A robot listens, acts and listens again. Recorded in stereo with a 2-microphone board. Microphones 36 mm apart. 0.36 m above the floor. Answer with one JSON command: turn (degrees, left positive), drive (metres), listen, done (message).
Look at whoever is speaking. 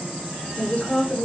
{"turn": 20}
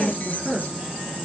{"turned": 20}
{"turn": 30}
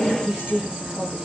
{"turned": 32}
{"turn": -20}
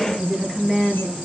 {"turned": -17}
{"done": "Found it: a woman speaking, straight ahead."}